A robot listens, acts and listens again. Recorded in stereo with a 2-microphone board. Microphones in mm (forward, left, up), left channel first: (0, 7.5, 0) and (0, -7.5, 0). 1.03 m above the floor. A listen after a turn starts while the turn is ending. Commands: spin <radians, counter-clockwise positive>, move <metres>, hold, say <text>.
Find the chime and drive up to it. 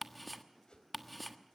hold
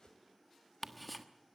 hold
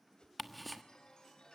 spin 1.13
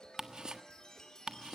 spin 0.79
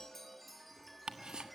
move 1.0
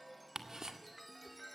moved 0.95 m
move 1.0
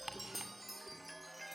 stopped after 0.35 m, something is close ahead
say Arrived at the chime, straight ahead.